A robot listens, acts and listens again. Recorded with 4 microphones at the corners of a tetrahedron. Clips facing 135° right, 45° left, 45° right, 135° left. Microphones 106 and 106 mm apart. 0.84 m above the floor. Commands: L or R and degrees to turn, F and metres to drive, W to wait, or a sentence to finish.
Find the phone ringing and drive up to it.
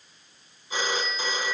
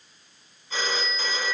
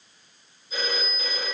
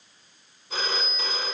L150
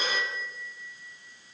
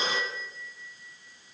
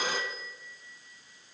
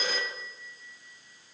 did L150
R20
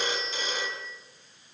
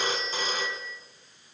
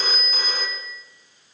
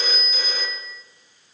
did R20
F1.0
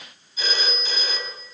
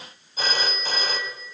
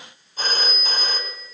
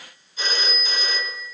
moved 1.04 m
F1.0
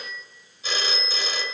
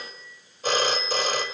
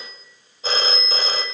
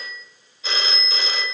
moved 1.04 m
F1.0
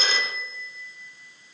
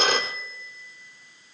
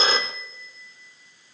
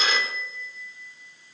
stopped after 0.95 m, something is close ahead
L10
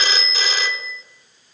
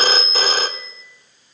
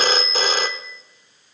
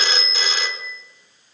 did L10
Arrived at the phone ringing, straight ahead.